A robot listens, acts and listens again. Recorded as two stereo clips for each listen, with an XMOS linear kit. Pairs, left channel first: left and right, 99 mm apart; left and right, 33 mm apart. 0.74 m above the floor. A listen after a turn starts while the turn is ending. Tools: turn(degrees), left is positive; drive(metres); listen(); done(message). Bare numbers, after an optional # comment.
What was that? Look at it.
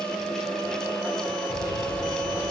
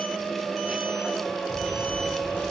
# The microwave: about 40° left or 140° left.
turn(40)
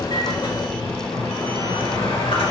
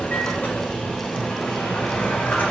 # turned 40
# So it is at 100° left.
turn(100)
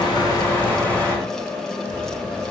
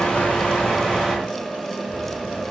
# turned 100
# The microwave is now 20° left.
turn(20)
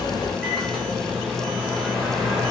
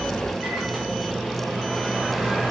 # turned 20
done("Found it: a microwave, straight ahead, 2 to 4 m away.")